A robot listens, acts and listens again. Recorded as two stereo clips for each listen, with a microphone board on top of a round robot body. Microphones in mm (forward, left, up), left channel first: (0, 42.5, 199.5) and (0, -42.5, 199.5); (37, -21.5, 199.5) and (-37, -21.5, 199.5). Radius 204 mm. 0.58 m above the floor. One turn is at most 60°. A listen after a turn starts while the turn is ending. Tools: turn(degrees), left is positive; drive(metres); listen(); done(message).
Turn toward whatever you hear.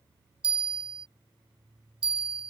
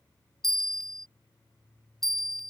turn(degrees=-60)
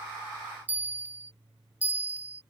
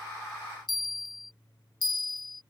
turn(degrees=-20)
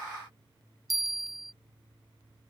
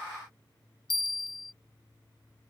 done("Found it: a bell, straight ahead.")